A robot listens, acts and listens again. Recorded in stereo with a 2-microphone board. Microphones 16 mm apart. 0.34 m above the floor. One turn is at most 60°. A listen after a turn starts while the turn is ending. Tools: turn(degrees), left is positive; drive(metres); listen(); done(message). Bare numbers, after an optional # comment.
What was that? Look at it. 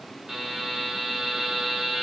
# The buzzer: about 25° right or 155° right.
turn(-25)
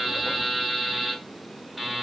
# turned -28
done("Facing the buzzer, 1 to 2 m away.")